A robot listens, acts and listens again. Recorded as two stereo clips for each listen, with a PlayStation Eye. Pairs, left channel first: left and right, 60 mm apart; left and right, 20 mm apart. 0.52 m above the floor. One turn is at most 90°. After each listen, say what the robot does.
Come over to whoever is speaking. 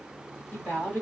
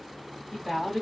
Turn 20° left.
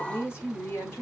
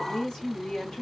Turn 90° left.
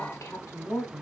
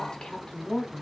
Turn 50° left.
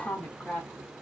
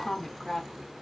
Turn 15° left.
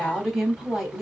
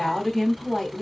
Drive 1.0 m forward.
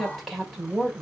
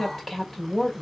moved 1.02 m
Drive 1.0 m forward.
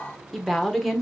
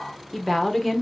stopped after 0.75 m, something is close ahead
I am next to the woman speaking.